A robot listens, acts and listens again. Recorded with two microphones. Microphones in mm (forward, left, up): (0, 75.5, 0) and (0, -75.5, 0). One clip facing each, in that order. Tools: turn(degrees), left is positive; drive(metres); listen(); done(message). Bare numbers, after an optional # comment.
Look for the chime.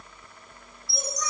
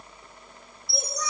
# The chime: about 35° right or 145° right.
turn(-35)
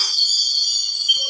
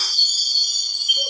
done("Found it: a chime, straight ahead.")